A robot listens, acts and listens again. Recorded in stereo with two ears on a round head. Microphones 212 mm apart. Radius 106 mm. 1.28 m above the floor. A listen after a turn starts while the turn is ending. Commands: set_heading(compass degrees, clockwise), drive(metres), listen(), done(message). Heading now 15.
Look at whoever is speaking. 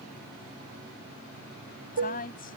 set_heading(335)
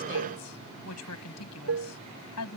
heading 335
set_heading(235)
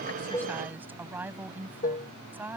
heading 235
set_heading(245)
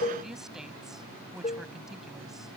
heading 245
done("Facing the woman speaking.")